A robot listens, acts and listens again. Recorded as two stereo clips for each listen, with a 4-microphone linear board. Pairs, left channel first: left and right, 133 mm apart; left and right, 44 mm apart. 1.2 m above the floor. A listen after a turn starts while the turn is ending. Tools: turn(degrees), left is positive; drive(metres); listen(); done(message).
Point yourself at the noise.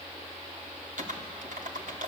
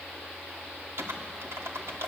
turn(degrees=-90)
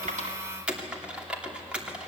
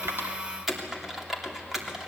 turn(degrees=-10)
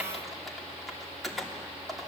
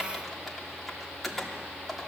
done("Facing the typing on a keyboard.")